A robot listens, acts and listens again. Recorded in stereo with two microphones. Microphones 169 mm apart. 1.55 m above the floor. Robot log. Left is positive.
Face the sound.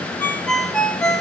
cmd yaw +30
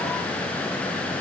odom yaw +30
cmd idle
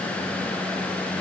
cmd idle
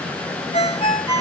note: So it is at 145° left.
cmd yaw +145
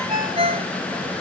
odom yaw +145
note: The ringtone is now 30° right.
cmd yaw -30
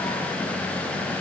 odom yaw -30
cmd idle
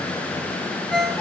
end: Facing the ringtone.